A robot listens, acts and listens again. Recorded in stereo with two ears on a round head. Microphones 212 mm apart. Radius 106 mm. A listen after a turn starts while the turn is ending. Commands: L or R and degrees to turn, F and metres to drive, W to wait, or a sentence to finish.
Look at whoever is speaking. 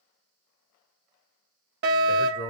L20
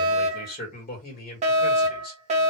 L140
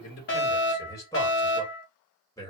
L15
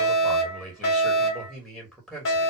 Facing the man speaking.